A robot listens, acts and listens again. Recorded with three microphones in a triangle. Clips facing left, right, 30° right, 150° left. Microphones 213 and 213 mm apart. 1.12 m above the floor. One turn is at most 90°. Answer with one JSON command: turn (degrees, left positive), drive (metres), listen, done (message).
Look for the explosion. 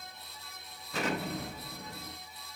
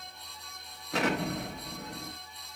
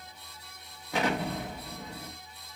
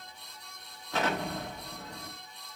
{"turn": -90}
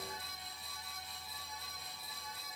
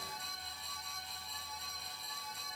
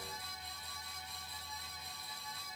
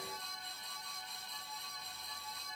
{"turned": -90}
{"turn": -15}
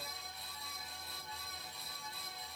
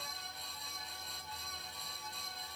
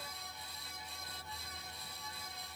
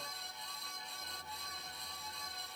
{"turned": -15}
{"done": "Facing where the explosion came from. I can't hear it now."}